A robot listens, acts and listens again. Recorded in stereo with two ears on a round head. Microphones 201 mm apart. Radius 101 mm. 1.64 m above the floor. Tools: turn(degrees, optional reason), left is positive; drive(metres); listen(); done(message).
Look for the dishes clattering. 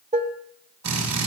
turn(degrees=-30, reason="The dishes clattering: about 30° right or 150° right.")
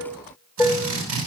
done("Facing the dishes clattering, 1 to 2 m away.")